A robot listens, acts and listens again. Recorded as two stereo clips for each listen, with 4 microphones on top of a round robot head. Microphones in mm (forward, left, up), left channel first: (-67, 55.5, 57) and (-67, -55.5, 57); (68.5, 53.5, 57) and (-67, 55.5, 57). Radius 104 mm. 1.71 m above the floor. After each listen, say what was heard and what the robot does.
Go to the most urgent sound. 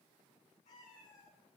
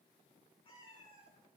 Keep listening.
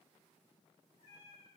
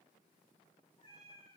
Keep listening.
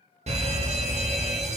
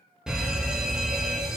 The fire alarm: 95° right. Turn 95° right.
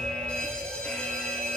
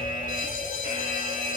The fire alarm is now 10° left. Turn 10° left.
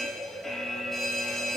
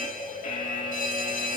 Drive 1.0 m forward.
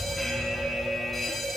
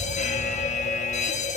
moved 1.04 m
Drive 1.0 m forward.
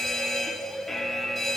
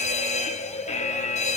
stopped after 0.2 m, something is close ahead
I am next to the fire alarm.